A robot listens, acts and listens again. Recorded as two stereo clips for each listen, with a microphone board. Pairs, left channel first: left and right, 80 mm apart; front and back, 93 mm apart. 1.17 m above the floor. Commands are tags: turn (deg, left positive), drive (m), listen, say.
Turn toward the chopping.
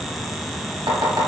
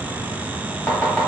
<turn deg="-75"/>
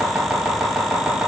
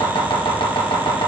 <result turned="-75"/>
<turn deg="-10"/>
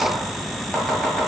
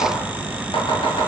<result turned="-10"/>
<say>Facing the chopping.</say>